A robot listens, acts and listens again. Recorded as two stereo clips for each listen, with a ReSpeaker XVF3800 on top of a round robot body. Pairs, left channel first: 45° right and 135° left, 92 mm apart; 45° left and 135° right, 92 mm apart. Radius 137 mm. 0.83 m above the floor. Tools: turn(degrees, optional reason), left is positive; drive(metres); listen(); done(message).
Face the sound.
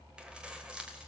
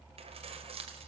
turn(degrees=-145, reason="The keys jangling: 145° right.")
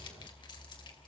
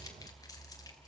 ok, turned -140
listen()
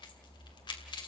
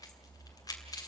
done("Found it: keys jangling, straight ahead, 2 to 4 m away.")